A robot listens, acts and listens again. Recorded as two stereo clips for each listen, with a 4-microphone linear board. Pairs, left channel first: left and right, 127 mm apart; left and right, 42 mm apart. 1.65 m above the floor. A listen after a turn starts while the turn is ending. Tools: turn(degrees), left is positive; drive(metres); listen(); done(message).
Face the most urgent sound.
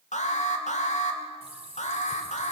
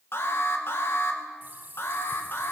turn(degrees=70)
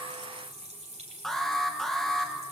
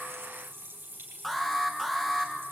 done("Facing the alarm.")